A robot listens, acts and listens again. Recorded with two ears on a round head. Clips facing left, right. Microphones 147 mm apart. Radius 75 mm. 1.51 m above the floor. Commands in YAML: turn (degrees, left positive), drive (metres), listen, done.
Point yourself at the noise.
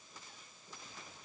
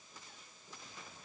listen: true
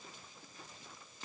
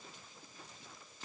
listen: true
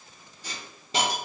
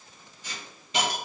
turn: 30
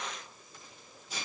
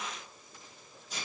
done: "Facing the hiss."